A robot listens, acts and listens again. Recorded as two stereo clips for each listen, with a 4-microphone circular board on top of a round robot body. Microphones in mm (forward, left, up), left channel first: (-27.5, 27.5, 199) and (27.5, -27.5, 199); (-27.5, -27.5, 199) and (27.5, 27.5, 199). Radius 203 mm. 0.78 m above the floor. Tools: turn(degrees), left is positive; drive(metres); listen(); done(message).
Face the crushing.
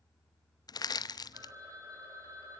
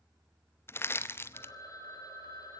turn(degrees=165)
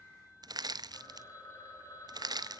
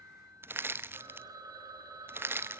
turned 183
turn(degrees=-15)
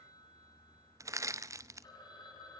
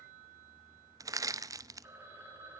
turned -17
done("Facing the crushing, under 1 m away.")